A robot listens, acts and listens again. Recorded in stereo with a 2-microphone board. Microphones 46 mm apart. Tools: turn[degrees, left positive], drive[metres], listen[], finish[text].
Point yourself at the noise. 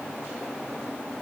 Action: listen[]
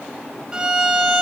Thought: The violin: about 15° right or 165° right.
Action: turn[-15]
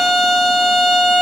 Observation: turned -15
Action: finish[Found it: a violin, straight ahead.]